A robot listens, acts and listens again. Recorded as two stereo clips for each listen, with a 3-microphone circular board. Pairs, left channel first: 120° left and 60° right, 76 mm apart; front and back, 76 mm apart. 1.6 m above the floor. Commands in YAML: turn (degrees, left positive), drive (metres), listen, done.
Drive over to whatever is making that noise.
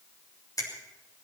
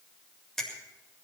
turn: 85
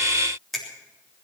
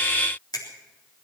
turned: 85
turn: 35
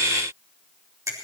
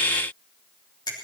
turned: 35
turn: -15
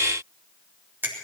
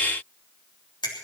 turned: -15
drive: 1.0
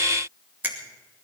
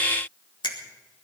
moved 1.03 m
drive: 1.0
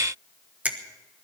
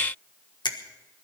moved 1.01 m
turn: 10
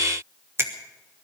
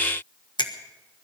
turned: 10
drive: 1.0
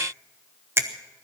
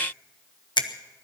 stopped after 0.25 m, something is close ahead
done: "Arrived at the finger snap, straight ahead."